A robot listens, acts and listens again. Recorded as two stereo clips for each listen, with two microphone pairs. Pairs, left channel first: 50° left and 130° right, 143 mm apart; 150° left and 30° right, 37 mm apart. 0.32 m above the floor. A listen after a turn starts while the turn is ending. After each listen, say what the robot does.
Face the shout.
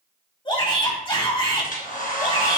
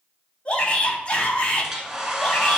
Turn 95° left.
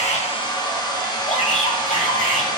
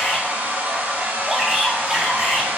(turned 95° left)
Turn 45° left.
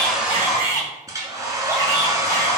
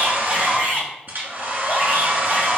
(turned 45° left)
Turn 10° right.
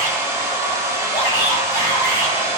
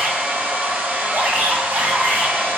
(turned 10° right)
Turn 10° right.
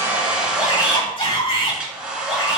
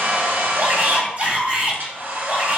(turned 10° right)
Found it: a shout, straight ahead, 2 to 4 m away.